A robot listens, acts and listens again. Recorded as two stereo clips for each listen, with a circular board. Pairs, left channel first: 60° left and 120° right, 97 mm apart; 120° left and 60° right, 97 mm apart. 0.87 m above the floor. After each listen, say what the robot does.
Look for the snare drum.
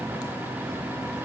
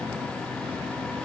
Keep listening.
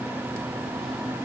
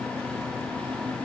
Keep listening.
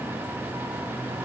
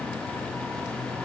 I can't make out a snare drum.